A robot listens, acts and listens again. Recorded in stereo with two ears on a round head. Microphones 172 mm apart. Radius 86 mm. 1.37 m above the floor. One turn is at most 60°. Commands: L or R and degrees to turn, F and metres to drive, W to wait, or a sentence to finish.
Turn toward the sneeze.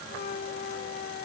W
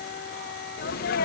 L50
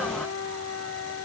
W
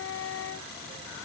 I heard a sneeze, but can't make it out now. It was about straight ahead or 80° left.